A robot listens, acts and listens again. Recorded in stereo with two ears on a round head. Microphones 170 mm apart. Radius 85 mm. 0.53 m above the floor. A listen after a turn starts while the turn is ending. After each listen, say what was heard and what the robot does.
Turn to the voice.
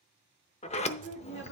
The woman speaking: about 70° left or 110° left. Turn 70° left.
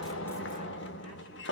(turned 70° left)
Keep listening.
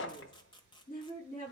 So it is at 40° left. Turn 40° left.
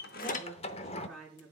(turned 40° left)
Facing the woman speaking, over 4 m away.